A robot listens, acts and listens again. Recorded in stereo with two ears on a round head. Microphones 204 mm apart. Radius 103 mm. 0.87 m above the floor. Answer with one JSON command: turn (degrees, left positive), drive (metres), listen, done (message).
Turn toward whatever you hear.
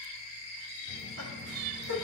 {"turn": -70}
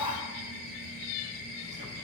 {"turn": -30}
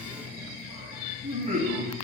{"turn": -35}
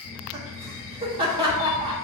{"turn": -20}
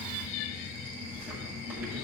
{"turn": -10}
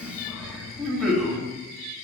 {"done": "Facing the laughter."}